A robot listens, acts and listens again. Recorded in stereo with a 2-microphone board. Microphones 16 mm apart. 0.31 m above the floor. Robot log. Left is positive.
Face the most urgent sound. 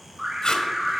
note: The alarm: about 20° right or 160° right.
cmd yaw -20
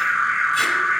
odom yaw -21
end: Found it: an alarm, straight ahead, over 4 m away.